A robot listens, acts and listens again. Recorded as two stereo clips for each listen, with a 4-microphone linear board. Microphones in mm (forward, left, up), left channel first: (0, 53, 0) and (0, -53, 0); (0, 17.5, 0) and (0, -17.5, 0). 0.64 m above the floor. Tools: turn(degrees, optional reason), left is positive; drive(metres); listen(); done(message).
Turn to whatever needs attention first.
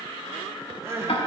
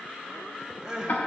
turn(degrees=-25, reason="The crying: about 25° right or 155° right.")
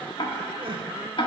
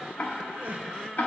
turn(degrees=-130, reason="So it is at 130° right.")
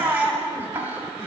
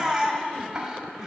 turn(degrees=-20, reason="The crying is now 20° right.")
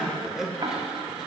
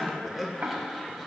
done("Found it: crying, straight ahead, under 1 m away.")